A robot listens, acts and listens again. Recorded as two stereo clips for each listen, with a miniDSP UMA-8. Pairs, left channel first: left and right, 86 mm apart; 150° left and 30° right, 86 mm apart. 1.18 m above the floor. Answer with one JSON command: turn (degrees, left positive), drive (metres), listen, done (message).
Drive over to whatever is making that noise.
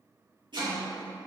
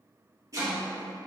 {"turn": -75}
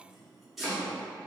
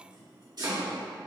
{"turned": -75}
{"drive": 1.0}
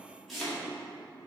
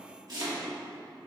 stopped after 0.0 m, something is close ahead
{"done": "Blocked. The chopping is further on, straight ahead."}